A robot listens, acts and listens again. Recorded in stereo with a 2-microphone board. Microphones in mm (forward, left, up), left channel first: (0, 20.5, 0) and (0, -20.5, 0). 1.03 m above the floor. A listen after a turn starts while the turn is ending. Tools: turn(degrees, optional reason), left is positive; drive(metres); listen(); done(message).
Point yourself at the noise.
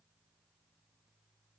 listen()
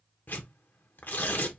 turn(degrees=55, reason="The tearing paper: about 55° left or 125° left.")
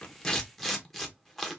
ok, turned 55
turn(degrees=10, reason="So it is at 10° left.")
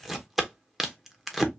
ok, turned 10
done("Facing the tearing paper, under 1 m away.")